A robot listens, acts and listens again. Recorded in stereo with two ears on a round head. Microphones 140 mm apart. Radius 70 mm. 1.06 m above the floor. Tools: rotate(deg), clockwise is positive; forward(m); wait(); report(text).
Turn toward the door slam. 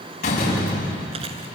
rotate(-50)
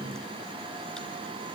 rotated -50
wait()
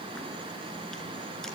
report("I heard a door slam, but can't make it out now. It was about straight ahead or 80° left.")